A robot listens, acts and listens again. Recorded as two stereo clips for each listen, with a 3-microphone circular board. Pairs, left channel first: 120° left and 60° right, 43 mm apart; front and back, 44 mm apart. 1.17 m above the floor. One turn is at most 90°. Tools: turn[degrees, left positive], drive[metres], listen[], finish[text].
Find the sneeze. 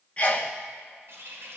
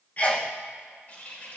Thought: The sneeze: 60° left.
Action: turn[60]
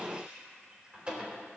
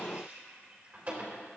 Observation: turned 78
Thought: Nothing new. It was at 20° right.
Action: turn[-20]
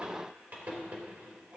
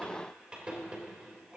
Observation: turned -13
Action: finish[Facing where the sneeze came from. I can't hear it now.]